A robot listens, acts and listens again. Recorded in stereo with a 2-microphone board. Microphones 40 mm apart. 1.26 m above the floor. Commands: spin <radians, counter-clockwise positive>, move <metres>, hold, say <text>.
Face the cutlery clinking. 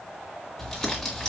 hold
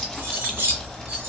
spin -1.05
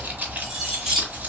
say Facing the cutlery clinking.